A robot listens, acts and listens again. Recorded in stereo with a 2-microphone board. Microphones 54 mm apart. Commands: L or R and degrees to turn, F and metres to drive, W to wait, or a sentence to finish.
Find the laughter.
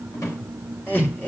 L40
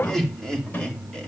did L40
L10
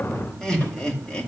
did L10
L15
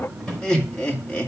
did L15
L20
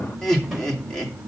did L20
L10
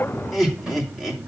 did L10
Found it: laughter, straight ahead, 2 to 4 m away.